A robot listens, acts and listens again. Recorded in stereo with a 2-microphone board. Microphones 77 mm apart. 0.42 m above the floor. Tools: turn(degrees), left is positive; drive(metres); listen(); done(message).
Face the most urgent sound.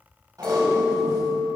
listen()
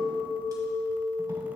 listen()
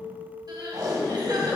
turn(degrees=-65)
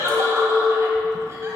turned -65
turn(degrees=-40)
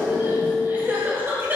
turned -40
turn(degrees=-30)
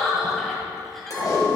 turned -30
done("Facing the crying.")